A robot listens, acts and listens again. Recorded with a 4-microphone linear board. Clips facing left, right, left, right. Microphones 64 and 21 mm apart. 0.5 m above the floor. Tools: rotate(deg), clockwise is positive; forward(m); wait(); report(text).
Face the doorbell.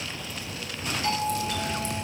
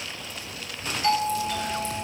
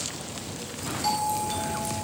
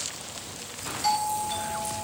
rotate(30)
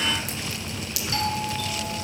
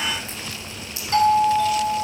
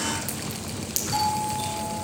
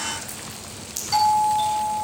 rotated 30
rotate(140)
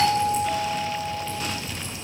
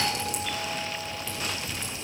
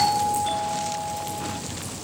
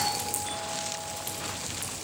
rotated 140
rotate(-25)
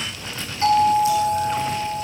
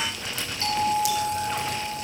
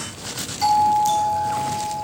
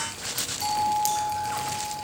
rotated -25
rotate(-30)
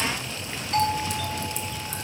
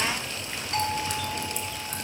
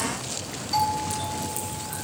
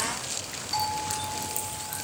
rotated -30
report("Facing the doorbell.")